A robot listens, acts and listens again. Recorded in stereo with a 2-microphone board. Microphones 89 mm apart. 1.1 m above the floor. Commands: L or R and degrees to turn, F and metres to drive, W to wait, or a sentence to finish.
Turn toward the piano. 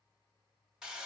W
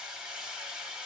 W
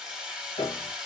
L70
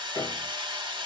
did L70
W
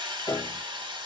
L35
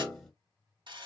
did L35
L10
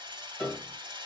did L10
Found it: a piano, straight ahead, 1 to 2 m away.